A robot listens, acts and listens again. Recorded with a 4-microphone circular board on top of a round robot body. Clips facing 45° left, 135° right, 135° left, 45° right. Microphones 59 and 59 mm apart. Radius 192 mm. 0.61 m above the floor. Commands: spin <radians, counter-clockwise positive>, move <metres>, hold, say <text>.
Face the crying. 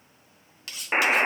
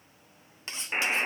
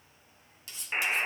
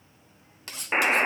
hold
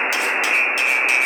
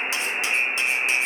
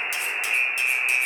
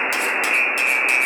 hold
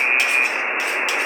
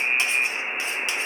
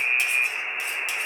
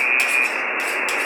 say I can't make out crying, only cutlery clinking and a buzzer.